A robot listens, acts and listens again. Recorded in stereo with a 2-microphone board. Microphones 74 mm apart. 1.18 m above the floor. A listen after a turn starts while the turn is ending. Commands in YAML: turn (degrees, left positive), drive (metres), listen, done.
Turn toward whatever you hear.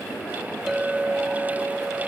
turn: -30
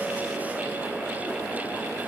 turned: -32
listen: true
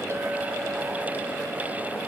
listen: true
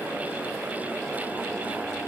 done: "I heard a clink, but can't make it out now. It was about 25° left or 140° right."